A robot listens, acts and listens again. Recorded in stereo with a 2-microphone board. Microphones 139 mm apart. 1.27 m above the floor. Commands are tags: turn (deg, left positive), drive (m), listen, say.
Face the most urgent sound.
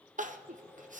<turn deg="-65"/>
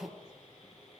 <turn deg="-10"/>
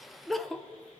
<say>Found it: crying, straight ahead, under 1 m away.</say>